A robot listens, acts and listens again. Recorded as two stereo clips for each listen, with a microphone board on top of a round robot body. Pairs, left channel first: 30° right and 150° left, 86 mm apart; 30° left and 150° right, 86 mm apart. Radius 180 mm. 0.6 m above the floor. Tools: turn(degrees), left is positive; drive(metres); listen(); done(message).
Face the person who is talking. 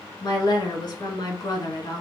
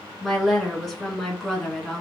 turn(degrees=-60)
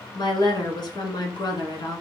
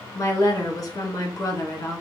turn(degrees=-15)
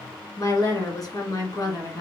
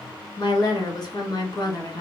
done("Found it: a woman speaking, straight ahead.")